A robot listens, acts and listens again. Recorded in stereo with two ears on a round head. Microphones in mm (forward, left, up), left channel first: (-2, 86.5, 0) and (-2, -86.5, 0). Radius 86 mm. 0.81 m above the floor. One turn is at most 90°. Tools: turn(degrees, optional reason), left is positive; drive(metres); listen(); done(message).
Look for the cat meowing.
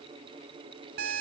listen()
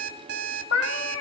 turn(degrees=90)
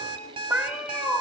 done("Found it: a cat meowing, straight ahead, 2 to 4 m away.")